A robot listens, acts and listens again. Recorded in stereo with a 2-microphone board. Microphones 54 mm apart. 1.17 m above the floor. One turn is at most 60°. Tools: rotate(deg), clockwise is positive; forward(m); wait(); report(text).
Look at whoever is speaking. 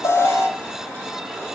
wait()
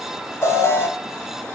wait()
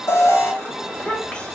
rotate(-20)
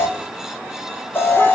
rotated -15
wait()
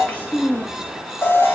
rotate(-60)
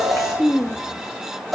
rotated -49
rotate(-60)
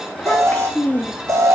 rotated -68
rotate(-30)
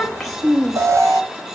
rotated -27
report("Found it: a child speaking, straight ahead, 1 to 2 m away.")